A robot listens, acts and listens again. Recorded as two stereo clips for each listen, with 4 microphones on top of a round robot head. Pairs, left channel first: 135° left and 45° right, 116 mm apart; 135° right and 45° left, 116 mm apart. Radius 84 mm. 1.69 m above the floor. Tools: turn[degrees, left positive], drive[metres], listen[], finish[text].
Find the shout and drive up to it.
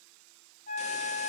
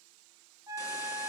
Action: listen[]
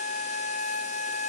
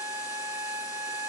Action: listen[]
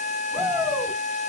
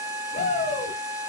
Thought: The shout: 145° right.
Action: turn[-145]
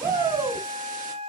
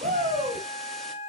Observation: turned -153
Thought: The shout is now 10° left.
Action: turn[10]
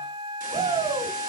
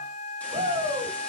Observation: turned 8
Action: drive[1.0]
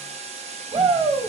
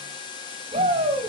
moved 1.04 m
Action: drive[1.0]
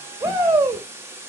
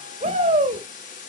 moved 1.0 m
Action: drive[1.0]
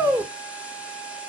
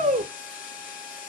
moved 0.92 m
Thought: The shout is now 15° left.
Action: turn[15]
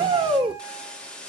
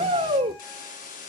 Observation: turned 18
Action: drive[1.0]
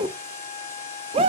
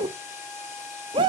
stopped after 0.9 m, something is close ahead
Action: finish[Arrived at the shout, straight ahead.]